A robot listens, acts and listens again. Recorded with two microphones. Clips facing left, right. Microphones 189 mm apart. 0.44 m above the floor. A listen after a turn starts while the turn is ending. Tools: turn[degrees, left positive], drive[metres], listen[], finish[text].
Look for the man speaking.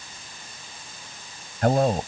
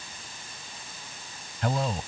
Thought: The man speaking: about 55° left or 125° left.
Action: turn[55]
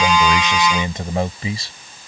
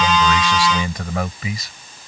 Thought: So it is at 35° left.
Action: turn[35]
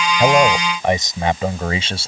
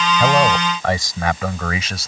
Thought: The man speaking is now 30° left.
Action: turn[30]
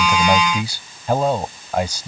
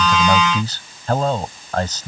Thought: The man speaking is now 10° left.
Action: turn[10]
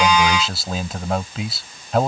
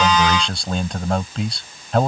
Action: finish[Found it: a man speaking, straight ahead.]